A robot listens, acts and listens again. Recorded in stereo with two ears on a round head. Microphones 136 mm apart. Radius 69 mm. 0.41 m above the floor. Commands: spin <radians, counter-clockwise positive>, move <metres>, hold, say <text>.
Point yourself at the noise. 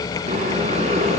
spin -0.79
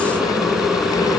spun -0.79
say Facing the boiling, 2 to 4 m away.